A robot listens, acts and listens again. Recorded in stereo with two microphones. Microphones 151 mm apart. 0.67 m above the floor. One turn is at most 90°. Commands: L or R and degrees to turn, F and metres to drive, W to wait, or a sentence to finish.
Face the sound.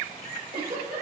R90
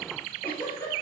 L10
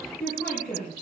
Found it: a giggle, straight ahead.